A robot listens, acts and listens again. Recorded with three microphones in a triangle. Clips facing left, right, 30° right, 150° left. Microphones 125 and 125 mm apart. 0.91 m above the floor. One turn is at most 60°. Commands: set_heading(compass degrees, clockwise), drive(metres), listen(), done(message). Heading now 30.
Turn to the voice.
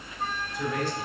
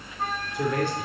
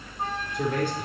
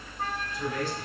set_heading(90)
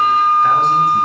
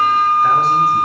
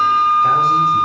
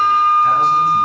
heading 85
listen()
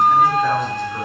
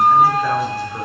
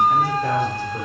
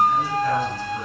listen()
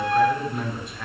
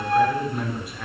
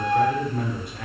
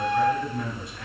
done("Facing the man speaking, 2 to 4 m away.")